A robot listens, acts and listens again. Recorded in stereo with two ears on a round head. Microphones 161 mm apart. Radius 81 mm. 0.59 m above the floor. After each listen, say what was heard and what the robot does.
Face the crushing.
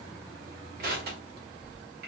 The crushing: about 60° right or 120° right. Turn 60° right.
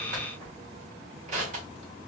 So it is at 45° right. Turn 45° right.
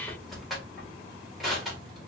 Found it: crushing, straight ahead, 1 to 2 m away.